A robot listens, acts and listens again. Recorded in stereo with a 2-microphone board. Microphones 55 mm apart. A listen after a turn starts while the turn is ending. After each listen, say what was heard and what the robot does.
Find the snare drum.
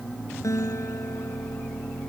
Keep listening.
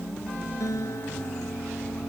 Keep listening.
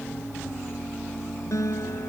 I can't make out a snare drum, only a guitar.